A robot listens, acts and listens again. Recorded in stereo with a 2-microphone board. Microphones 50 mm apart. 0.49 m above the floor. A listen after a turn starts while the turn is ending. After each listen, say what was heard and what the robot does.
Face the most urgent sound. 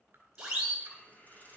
The siren: about 15° right or 165° right. Turn 15° right.
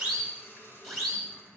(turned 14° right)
Facing the siren, over 4 m away.